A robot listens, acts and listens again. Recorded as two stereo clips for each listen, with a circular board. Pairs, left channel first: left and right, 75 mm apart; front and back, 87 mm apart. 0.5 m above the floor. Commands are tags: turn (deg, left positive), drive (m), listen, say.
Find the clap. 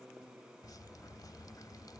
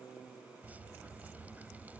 <listen/>
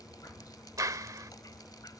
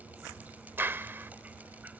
<turn deg="-120"/>
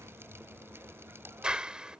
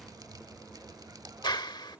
<turn deg="-15"/>
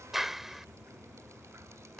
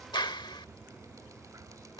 <say>Facing the clap.</say>